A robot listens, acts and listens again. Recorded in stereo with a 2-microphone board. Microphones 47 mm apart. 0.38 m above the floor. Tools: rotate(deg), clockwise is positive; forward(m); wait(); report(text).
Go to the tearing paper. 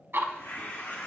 rotate(-65)
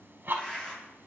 rotate(-20)
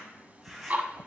forward(1.0)
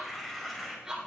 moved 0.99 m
forward(1.0)
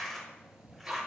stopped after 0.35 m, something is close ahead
report("I am next to the tearing paper.")